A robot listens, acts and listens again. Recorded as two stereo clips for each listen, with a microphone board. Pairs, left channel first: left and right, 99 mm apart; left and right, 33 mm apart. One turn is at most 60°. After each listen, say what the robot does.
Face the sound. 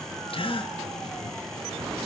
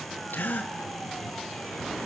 Turn 60° left.
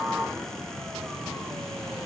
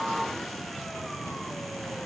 Keep listening.
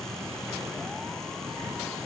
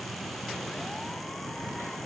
I heard a gasp, but can't make it out now. It was about 5° left or 55° left.